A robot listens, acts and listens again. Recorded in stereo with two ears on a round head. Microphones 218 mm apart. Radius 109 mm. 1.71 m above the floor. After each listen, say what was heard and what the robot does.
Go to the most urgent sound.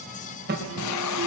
The alarm: about 45° right or 135° right. Turn 45° right.
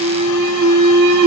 So it is at 90° right. Turn 90° right.
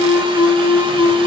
The alarm is now 10° right. Turn 10° right.
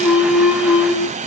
Drive 1.0 m forward.
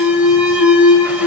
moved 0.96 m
Drive 1.0 m forward.
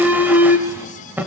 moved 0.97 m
Drive 1.0 m forward.
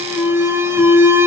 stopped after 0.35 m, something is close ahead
The alarm is now 10° right. Turn 10° right.
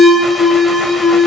Arrived at the alarm, straight ahead.